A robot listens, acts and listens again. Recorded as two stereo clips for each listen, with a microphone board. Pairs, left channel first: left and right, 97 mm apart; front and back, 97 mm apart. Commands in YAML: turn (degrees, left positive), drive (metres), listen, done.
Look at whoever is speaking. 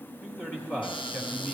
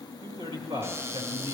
turn: 160
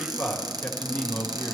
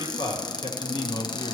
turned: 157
done: "Found it: a man speaking, straight ahead, 2 to 4 m away."